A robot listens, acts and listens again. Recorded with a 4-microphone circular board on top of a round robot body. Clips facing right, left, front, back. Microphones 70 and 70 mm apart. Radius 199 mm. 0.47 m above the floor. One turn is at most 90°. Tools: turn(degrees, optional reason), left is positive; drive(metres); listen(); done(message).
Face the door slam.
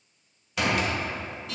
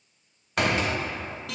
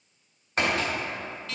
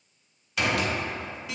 turn(degrees=50, reason="The door slam: 50° left.")
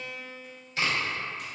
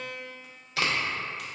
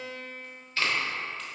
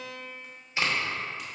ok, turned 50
done("I heard a door slam from this way, but can't make it out now.")